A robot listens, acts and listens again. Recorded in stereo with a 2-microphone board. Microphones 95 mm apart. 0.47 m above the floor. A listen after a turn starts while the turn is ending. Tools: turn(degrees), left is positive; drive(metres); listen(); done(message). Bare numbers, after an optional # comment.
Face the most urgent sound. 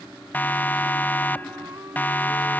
# The siren: about 20° left or 160° left.
turn(20)
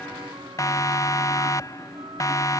# So it is at 140° left.
turn(140)
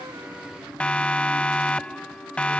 # The siren is now 15° left.
turn(15)
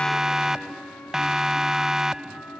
done("Facing the siren.")